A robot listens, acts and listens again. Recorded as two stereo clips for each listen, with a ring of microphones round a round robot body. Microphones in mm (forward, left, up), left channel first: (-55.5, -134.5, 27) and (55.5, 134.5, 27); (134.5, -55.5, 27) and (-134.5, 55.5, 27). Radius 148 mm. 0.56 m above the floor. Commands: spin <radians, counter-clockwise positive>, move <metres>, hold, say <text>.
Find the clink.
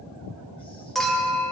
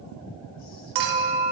spin 2.79
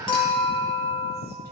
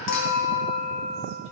spin -0.70
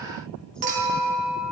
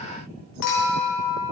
say Found it: a clink, straight ahead, 1 to 2 m away.